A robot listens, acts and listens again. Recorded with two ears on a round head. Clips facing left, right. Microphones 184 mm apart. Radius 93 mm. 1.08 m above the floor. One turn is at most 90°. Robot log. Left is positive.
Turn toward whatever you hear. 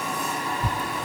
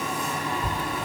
note: The tearing paper: about 55° left or 125° left.
cmd yaw +55
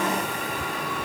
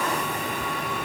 cmd idle
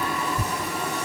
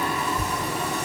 note: So it is at 55° left.
cmd yaw +55
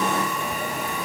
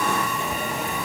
cmd idle
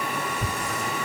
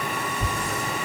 note: The tearing paper is now 15° left.
cmd yaw +15
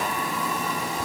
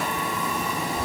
cmd idle
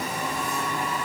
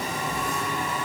cmd idle
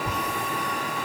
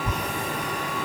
end: Found it: tearing paper, straight ahead.